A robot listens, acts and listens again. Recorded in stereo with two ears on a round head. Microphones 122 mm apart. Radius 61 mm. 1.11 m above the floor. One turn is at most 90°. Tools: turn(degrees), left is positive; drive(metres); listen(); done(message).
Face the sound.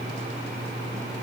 listen()
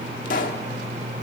turn(degrees=70)
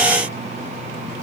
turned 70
listen()
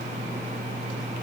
done("I heard a pop, but can't make it out now. It was about straight ahead or 40° left.")